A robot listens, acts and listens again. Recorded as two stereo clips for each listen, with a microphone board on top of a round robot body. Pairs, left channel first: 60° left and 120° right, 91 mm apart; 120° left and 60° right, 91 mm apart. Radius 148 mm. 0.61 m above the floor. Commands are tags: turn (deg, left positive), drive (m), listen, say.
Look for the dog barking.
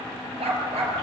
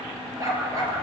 <turn deg="-115"/>
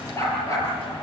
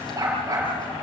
<say>Found it: a dog barking, straight ahead.</say>